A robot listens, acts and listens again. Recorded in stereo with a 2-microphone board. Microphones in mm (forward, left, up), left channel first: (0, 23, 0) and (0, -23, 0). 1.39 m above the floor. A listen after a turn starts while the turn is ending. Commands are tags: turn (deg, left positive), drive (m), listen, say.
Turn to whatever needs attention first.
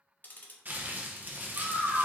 <turn deg="-65"/>
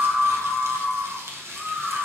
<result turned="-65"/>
<say>Facing the scream.</say>